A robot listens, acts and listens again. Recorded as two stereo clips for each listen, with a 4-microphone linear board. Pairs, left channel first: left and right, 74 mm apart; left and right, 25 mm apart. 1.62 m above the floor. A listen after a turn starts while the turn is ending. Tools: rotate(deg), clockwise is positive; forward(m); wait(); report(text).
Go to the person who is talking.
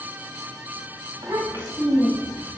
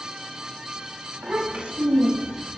rotate(60)
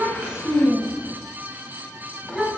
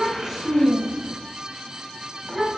forward(1.0)
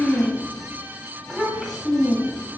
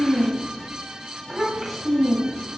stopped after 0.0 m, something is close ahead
report("Something is in my way. I am facing the child speaking but have not reached it.")